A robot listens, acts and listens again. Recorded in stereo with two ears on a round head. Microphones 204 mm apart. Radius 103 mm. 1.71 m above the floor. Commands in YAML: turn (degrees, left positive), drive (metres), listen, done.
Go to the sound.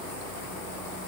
listen: true
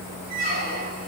turn: -40
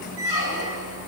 turn: -95
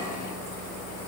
listen: true
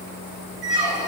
turn: -10
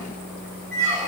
drive: 1.0
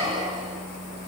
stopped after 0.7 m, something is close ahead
done: "I am next to the squeak."